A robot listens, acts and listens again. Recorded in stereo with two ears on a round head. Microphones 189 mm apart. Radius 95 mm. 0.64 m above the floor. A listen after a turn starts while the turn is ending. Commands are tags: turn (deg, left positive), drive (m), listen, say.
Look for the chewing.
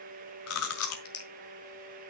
<turn deg="90"/>
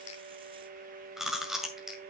<say>Found it: chewing, straight ahead.</say>